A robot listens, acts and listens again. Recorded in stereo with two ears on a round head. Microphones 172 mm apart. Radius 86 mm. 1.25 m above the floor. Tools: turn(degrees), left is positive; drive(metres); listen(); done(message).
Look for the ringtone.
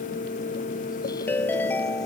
turn(degrees=30)
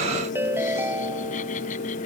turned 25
turn(degrees=-10)
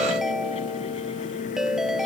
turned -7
done("Found it: a ringtone, straight ahead.")